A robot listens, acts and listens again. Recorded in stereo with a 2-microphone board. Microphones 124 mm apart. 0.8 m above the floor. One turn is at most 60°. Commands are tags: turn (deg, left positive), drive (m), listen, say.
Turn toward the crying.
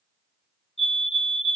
<listen/>
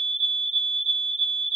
<listen/>
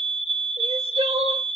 <turn deg="-55"/>
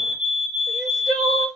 <say>Facing the crying.</say>